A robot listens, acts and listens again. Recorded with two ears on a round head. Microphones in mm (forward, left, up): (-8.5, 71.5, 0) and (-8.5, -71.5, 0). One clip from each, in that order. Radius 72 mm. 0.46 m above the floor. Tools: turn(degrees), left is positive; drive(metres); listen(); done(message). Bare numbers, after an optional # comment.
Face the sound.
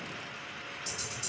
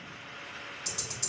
# The ticking: about 45° right or 135° right.
turn(-45)
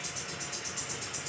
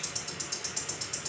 # So it is at 85° right.
turn(-85)
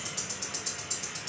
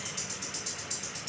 # The ticking is now 10° left.
turn(10)
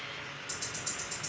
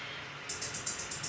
done("Found it: ticking, straight ahead.")